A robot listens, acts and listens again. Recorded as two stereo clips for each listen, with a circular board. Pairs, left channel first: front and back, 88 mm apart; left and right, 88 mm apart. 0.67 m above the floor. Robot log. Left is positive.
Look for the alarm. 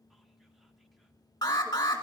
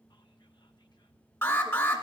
note: The alarm: 35° left.
cmd yaw +35
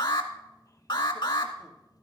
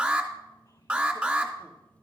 note: The alarm is now 10° right.
cmd yaw -10
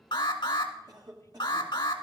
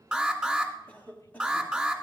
end: Facing the alarm, 1 to 2 m away.